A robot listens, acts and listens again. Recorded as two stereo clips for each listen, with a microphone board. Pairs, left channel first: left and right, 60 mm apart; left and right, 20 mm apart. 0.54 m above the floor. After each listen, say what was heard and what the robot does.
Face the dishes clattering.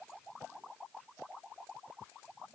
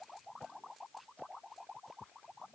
Keep listening.
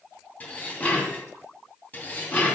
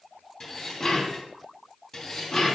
The dishes clattering: about 25° left or 155° left. Turn 25° left.
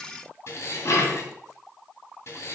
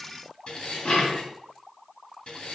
So it is at 125° left. Turn 125° left.
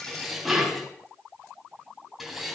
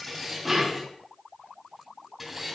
Facing the dishes clattering.